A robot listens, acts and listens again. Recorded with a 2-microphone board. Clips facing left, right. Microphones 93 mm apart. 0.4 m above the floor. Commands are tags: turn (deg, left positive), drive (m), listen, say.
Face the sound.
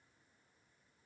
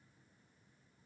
<listen/>
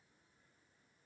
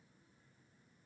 <listen/>
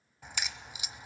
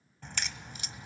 <turn deg="30"/>
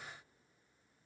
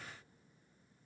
<listen/>
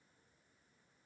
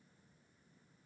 <say>I heard a crack, but can't make it out now. It was about 20° right or 140° left.</say>